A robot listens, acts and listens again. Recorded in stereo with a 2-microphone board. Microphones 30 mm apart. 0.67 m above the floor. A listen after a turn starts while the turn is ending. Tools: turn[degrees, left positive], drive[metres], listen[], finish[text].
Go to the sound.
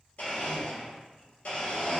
Thought: The blender: about 60° left or 120° left.
Action: turn[60]
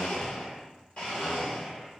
Thought: So it is at 50° left.
Action: turn[50]
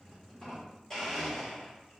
Thought: The blender is now 15° left.
Action: turn[15]
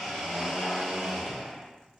Action: drive[1.0]
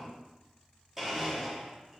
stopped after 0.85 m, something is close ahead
Thought: The blender is now 10° right.
Action: turn[-10]
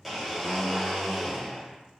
Action: finish[Arrived at the blender, straight ahead.]